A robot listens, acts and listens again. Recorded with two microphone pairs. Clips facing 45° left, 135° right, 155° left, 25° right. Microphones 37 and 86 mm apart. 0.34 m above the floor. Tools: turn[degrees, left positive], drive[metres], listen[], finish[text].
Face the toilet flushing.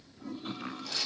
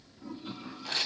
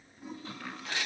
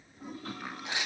Action: finish[Found it: a toilet flushing, straight ahead.]